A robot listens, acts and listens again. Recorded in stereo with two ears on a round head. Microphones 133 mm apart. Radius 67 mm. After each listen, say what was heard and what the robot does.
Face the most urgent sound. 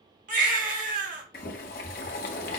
The baby crying: about 60° right or 120° right. Turn 60° right.
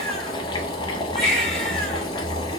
Found it: a baby crying, straight ahead, 1 to 2 m away.